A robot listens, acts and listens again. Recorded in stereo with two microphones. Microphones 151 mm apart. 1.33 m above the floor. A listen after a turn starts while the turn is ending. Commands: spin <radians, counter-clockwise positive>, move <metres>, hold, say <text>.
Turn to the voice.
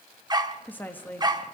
spin 0.52
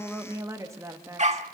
spin -0.35
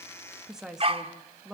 say Found it: a woman speaking, straight ahead.